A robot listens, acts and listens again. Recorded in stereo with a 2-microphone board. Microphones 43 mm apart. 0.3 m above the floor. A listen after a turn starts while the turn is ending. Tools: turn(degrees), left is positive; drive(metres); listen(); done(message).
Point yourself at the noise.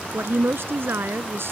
turn(degrees=-70)
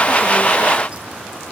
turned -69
listen()
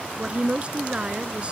turn(degrees=-30)
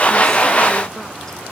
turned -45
turn(degrees=15)
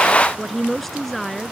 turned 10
done("Found it: a woman speaking, straight ahead.")